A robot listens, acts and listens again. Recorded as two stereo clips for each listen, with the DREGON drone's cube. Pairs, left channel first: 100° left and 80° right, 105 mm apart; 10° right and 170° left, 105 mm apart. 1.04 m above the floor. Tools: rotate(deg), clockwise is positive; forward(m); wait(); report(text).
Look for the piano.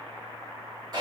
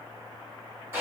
wait()
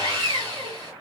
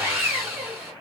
wait()
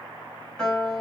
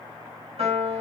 rotate(175)
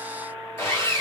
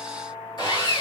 rotate(15)
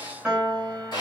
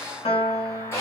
report("Facing the piano, 2 to 4 m away.")